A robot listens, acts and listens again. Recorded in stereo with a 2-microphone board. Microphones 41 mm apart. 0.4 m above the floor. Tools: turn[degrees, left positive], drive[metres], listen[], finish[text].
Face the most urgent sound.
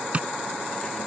Action: listen[]
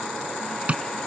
Action: listen[]
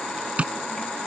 Action: finish[I can't make out anything urgent to turn to.]